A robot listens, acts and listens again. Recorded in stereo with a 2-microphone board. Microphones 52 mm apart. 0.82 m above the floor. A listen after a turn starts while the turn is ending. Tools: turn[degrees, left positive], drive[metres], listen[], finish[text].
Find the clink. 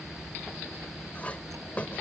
Thought: The clink: about 30° left or 150° left.
Action: turn[30]
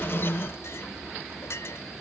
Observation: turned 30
Thought: So it is at 120° left.
Action: turn[120]
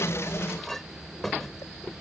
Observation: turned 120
Action: finish[Facing the clink.]